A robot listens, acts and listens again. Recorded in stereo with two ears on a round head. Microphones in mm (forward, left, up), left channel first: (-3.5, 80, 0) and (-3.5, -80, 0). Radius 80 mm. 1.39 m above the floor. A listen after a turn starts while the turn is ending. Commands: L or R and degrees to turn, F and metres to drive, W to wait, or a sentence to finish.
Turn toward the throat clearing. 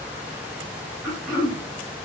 R30
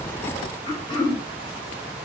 L25
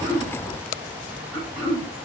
R15
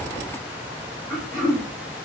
Found it: throat clearing, straight ahead, 1 to 2 m away.